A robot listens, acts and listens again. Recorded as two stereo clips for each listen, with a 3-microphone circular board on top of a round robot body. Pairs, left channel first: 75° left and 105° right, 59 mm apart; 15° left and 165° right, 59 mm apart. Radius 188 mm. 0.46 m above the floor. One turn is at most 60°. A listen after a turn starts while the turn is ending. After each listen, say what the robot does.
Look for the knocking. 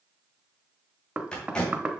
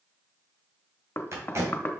Turn 35° right.
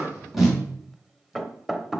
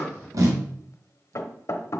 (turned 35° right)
Turn 20° right.
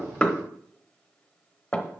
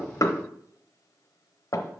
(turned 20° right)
Facing the knocking, under 1 m away.